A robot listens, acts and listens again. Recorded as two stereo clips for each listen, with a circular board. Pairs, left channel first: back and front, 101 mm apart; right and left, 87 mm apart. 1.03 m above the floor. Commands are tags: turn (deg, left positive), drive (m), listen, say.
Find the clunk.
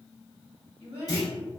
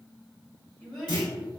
<turn deg="-130"/>
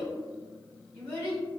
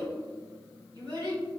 <say>Facing where the clunk came from. I can't hear it now.</say>